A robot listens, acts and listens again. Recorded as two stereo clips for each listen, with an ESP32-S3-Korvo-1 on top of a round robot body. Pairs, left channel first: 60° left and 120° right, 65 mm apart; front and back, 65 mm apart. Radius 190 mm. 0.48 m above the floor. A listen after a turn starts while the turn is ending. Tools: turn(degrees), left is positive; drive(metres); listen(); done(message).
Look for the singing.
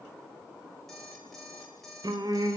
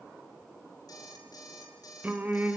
turn(degrees=-115)
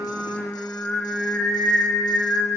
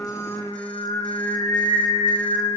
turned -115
turn(degrees=-20)
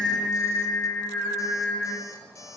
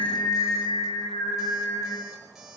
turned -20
done("Facing the singing, over 4 m away.")